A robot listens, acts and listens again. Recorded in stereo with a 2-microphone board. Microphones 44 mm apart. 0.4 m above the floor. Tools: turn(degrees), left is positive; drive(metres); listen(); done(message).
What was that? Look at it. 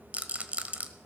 turn(degrees=-35)
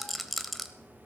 done("Found it: a rattle, straight ahead, 1 to 2 m away.")